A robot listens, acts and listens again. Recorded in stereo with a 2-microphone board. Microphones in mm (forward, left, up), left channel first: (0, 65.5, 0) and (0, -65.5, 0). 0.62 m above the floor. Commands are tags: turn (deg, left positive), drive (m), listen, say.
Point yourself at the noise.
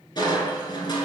<turn deg="35"/>
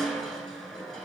<say>Facing the crushing.</say>